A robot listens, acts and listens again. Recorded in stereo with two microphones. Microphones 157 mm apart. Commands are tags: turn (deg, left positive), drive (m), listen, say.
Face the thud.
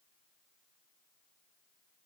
<listen/>
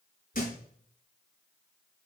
<turn deg="60"/>
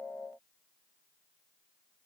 <listen/>
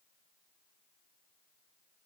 <say>I heard a thud, but can't make it out now. It was about straight ahead or 60° left.</say>